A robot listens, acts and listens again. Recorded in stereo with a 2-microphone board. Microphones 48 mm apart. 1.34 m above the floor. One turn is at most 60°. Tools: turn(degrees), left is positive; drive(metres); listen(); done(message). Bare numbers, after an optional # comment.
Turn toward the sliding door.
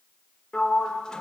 turn(30)
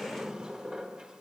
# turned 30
# So it is at 20° right.
turn(-20)
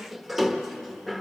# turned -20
done("Found it: a sliding door, straight ahead.")